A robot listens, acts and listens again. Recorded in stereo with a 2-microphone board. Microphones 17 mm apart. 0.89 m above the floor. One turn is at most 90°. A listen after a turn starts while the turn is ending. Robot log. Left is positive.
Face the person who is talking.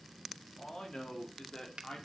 note: The man speaking: about 60° left or 120° left.
cmd yaw +60
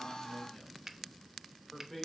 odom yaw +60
note: So it is at 10° left.
cmd yaw +10
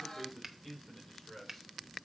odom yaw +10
end: Found it: a man speaking, straight ahead.